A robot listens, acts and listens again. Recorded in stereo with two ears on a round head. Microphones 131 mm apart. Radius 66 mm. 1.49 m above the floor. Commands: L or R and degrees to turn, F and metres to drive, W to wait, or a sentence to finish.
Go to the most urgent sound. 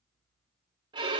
W
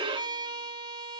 W
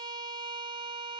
I can't make out anything urgent to turn to.